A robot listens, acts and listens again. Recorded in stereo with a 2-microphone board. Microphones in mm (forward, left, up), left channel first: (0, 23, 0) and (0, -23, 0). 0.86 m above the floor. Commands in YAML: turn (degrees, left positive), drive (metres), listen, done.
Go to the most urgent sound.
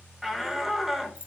turn: -30
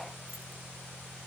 listen: true
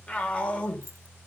turn: 25
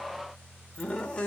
turn: 20
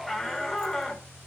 drive: 1.0
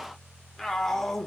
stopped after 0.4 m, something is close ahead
done: "Blocked. The shout is further on, straight ahead."